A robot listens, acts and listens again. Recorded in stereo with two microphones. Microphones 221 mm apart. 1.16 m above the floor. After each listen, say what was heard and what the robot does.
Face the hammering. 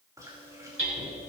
The hammering: about 70° right or 110° right. Turn 70° right.
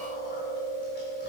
Keep listening.
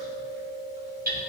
So it is at 40° right. Turn 40° right.
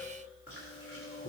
Keep listening.
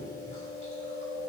Keep listening.
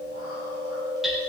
I heard hammering from this way, but can't make it out now.